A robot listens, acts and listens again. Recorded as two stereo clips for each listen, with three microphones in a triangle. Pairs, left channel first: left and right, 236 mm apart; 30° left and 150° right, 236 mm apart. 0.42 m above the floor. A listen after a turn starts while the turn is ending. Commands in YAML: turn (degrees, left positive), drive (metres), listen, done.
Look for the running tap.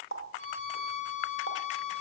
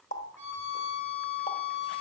turn: 80
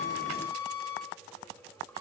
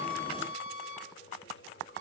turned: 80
listen: true
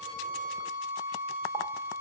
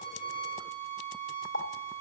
turn: 10
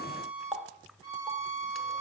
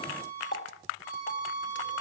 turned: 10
done: "Facing the running tap."